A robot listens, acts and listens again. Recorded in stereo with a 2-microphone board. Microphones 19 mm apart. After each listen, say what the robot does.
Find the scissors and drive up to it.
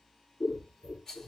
Turn 55° left.
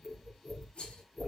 Drive 1.0 m forward.
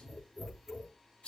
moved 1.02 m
Turn 10° right.
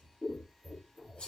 Drive 1.0 m forward.
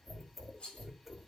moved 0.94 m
Drive 1.0 m forward.
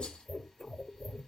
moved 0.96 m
Drive 1.0 m forward.
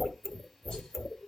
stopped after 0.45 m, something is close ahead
Turn 10° left.
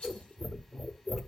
I am next to the scissors.